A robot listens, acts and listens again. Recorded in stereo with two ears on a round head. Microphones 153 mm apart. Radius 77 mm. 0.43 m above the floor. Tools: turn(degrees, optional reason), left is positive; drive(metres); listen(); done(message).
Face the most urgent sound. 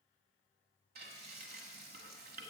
listen()
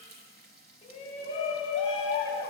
turn(degrees=30, reason="The shout: about 30° left or 150° left.")
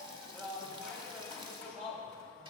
done("Found it: a shout, straight ahead, 2 to 4 m away.")